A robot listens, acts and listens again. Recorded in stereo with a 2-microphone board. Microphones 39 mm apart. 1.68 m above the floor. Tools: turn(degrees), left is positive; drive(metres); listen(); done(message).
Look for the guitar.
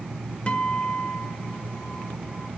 turn(degrees=35)
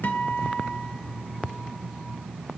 turn(degrees=105)
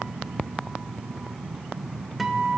done("Found it: a guitar, straight ahead, under 1 m away.")